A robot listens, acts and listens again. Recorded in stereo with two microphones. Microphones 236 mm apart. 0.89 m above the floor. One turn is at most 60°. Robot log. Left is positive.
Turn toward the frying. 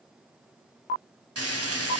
cmd yaw -60
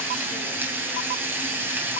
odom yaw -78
note: So it is at 10° right.
cmd yaw -10
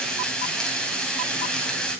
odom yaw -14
end: Facing the frying.